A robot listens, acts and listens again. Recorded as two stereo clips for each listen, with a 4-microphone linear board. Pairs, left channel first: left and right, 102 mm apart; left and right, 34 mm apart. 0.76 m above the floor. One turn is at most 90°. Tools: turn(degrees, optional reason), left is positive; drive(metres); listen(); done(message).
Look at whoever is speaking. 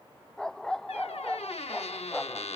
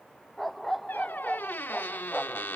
listen()
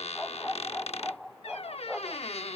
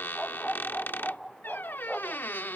listen()
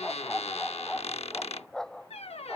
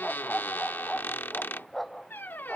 done("I can't make out anyone speaking to turn to.")